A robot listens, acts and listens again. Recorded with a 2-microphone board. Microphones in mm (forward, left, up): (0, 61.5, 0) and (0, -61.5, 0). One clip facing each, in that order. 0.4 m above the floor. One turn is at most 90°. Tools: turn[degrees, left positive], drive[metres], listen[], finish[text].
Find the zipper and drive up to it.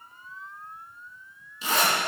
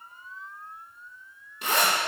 Thought: The zipper: about 65° right or 115° right.
Action: turn[-65]
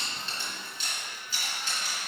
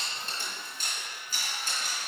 Thought: So it is at 50° right.
Action: turn[-50]
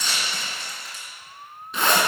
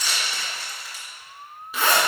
Action: drive[1.0]
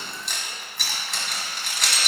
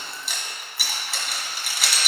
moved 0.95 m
Action: drive[1.0]
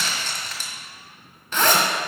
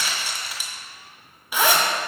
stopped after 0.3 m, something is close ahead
Thought: The zipper is now 10° right.
Action: turn[-10]
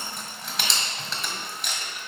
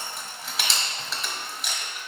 Action: finish[I am next to the zipper.]